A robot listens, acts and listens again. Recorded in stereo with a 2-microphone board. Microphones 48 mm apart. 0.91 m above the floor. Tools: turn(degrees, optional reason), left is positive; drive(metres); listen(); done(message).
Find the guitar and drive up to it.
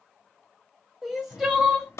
listen()
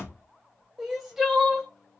listen()
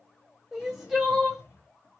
done("I can't make out a guitar to turn to.")